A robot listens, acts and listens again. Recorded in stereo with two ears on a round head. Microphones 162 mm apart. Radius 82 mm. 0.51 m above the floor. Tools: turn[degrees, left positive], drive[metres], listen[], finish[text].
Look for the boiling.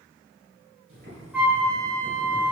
Thought: The boiling: about 60° right or 120° right.
Action: turn[-60]
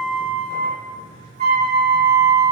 Thought: So it is at 55° right.
Action: turn[-55]
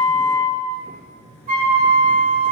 Action: finish[Found it: boiling, straight ahead.]